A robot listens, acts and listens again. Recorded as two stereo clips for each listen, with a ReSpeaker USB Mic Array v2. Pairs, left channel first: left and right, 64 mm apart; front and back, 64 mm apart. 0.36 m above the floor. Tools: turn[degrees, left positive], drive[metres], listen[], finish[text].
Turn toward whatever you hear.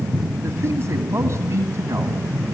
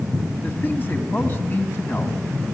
Thought: The man speaking: 50° right.
Action: turn[-50]
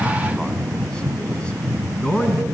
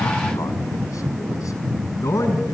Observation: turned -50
Thought: The man speaking is now 20° left.
Action: turn[20]
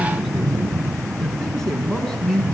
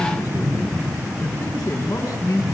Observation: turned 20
Action: finish[Found it: a man speaking, straight ahead, over 4 m away.]